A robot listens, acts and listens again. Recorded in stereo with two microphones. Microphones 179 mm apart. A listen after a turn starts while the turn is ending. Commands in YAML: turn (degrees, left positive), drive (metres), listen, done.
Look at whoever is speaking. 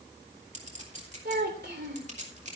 turn: -70
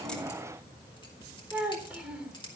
turn: -10
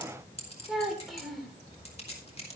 done: "Facing the child speaking."